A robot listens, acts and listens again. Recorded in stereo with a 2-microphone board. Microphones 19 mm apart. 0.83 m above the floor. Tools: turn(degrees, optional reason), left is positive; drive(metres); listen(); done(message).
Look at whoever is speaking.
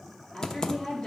turn(degrees=65, reason="The woman speaking: about 65° left or 115° left.")
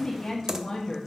turn(degrees=40, reason="So it is at 40° left.")
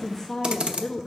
turn(degrees=25, reason="The woman speaking is now 25° left.")
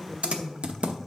done("Found it: a woman speaking, straight ahead, 1 to 2 m away.")